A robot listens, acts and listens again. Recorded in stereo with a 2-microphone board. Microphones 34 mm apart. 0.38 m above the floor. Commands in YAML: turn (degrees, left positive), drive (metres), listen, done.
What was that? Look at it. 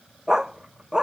turn: -20
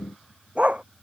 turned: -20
turn: -135
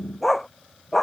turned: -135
done: "Facing the dog barking."